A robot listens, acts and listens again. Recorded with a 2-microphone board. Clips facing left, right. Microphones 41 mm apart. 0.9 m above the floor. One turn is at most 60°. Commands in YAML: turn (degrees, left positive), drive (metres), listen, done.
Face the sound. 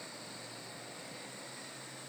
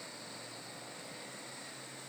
listen: true
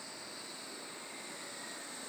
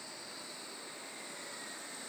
listen: true
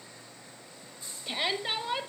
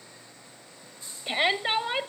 turn: -25
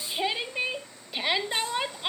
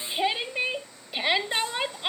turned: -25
done: "Facing the shout, 1 to 2 m away."